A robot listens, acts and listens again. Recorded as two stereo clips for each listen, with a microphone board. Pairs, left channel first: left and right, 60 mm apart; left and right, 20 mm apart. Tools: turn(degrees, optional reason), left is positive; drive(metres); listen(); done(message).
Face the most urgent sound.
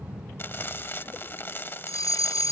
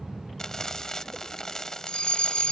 turn(degrees=90)
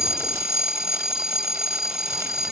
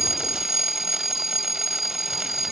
done("Found it: a fire alarm, straight ahead.")